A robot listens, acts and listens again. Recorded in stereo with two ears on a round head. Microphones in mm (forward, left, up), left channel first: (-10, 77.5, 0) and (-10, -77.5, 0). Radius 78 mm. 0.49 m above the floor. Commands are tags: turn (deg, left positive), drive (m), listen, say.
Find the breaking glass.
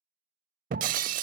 <turn deg="-45"/>
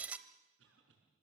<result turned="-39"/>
<turn deg="-10"/>
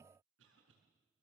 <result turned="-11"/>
<say>I heard breaking glass from this way, but can't make it out now.</say>